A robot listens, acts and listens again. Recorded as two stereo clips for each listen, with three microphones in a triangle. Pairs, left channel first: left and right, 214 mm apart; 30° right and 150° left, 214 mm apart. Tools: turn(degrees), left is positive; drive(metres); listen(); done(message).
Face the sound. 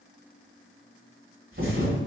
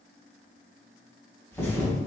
turn(degrees=-110)
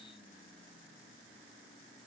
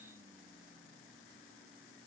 done("Facing where the thud came from. I can't hear it now.")